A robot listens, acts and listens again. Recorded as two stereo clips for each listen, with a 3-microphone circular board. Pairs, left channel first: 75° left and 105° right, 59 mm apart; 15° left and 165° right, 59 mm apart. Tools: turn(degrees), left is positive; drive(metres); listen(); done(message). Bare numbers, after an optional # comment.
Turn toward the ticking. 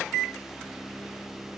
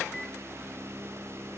listen()
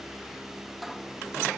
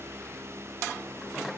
listen()
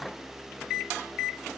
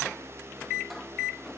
done("I can't make out ticking to turn to.")